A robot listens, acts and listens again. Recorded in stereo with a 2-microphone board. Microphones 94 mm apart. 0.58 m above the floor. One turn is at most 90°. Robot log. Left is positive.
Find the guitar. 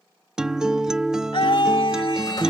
cmd yaw -30
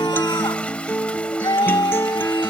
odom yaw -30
note: So it is at 25° left.
cmd yaw +25
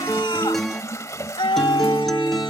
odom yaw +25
end: Facing the guitar.